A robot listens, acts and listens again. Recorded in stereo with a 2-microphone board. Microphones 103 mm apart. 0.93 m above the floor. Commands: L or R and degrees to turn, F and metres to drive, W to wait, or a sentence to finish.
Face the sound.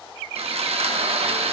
R90
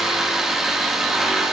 Facing the sawing.